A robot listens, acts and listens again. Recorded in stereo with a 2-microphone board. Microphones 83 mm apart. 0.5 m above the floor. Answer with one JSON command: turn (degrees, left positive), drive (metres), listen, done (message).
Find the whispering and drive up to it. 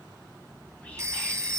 {"turn": 30}
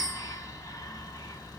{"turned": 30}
{"turn": 135}
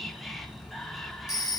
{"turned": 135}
{"drive": 1.0}
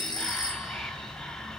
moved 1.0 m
{"turn": 10}
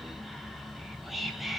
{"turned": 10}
{"drive": 1.0}
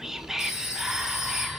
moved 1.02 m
{"drive": 1.0}
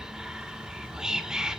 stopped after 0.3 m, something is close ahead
{"turn": -10}
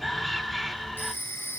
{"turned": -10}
{"done": "I am next to the whispering."}